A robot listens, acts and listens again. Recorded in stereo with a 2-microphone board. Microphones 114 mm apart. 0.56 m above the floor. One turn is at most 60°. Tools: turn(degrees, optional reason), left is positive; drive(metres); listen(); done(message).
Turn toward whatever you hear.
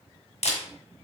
turn(degrees=60)
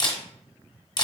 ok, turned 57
turn(degrees=40, reason="So it is at 40° left.")
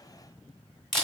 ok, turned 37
done("Found it: a camera shutter, straight ahead.")